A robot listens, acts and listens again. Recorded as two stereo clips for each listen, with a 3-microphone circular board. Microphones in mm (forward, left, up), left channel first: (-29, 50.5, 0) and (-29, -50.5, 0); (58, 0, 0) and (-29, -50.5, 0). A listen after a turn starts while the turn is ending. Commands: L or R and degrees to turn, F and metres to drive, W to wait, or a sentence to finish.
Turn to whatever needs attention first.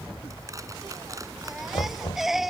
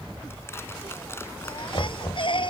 Facing the baby crying.